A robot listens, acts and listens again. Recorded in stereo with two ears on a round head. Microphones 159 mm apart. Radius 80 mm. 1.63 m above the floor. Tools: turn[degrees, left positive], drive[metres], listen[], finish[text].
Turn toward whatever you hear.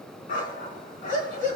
Thought: The dog barking: about 50° left or 130° left.
Action: turn[50]
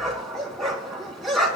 Action: finish[Facing the dog barking.]